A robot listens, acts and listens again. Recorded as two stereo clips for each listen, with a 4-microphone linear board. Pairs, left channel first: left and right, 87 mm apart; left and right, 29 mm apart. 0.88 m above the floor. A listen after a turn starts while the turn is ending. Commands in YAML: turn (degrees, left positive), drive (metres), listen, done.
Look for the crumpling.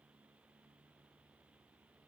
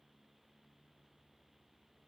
listen: true
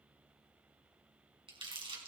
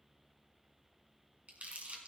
turn: -70
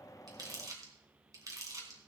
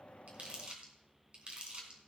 turn: -40
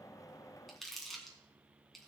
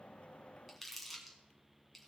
done: "Found it: crumpling, straight ahead."